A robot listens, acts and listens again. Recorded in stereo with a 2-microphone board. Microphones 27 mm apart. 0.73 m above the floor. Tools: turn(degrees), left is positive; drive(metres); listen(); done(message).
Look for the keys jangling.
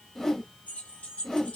turn(degrees=90)
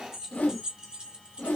turn(degrees=-40)
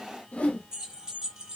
turn(degrees=-35)
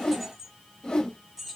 turn(degrees=-10)
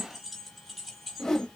done("Found it: keys jangling, straight ahead.")